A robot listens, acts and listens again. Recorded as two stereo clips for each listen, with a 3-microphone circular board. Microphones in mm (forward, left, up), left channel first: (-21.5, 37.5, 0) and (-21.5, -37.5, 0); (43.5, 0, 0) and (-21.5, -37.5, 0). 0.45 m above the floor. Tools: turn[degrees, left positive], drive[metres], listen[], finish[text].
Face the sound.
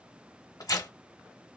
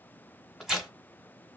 Thought: The tearing paper: 125° left.
Action: turn[125]
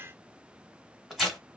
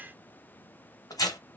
Action: finish[Facing the tearing paper.]